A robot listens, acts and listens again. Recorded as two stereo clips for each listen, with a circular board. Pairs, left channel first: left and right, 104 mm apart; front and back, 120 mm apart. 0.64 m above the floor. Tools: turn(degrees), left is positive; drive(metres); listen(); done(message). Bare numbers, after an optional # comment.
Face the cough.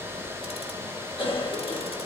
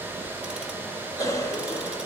# The cough: 60° left.
turn(60)
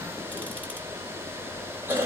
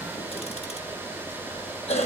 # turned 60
# The cough is now 20° right.
turn(-20)
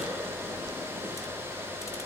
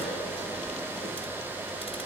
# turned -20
listen()
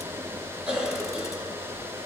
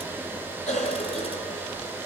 # The cough is now 10° right.
turn(-10)
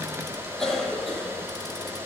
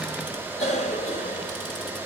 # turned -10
done("Found it: a cough, straight ahead, 2 to 4 m away.")